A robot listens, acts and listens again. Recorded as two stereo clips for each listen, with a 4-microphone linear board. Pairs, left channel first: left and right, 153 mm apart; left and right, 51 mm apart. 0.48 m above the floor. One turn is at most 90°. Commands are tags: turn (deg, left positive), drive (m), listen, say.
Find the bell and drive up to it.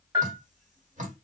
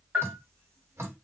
<turn deg="-20"/>
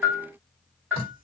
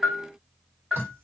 <turn deg="-10"/>
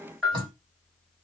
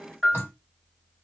<drive m="1.0"/>
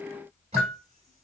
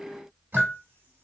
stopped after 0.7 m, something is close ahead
<say>Arrived at the bell, straight ahead.</say>